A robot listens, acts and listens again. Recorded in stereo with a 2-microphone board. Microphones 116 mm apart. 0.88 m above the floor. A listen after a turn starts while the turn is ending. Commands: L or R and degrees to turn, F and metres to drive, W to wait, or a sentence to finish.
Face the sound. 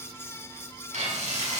R90
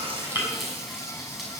Found it: frying, straight ahead, over 4 m away.